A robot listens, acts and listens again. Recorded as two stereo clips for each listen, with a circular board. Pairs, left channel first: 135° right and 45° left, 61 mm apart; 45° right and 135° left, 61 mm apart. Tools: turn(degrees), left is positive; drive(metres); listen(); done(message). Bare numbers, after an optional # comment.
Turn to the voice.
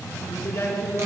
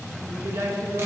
# The woman speaking: 170° left.
turn(170)
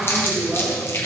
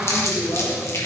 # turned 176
# The woman speaking is now 30° right.
turn(-30)
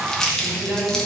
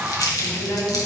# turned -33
# The woman speaking is now 10° right.
turn(-10)
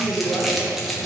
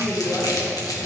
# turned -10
done("Found it: a woman speaking, straight ahead, 2 to 4 m away.")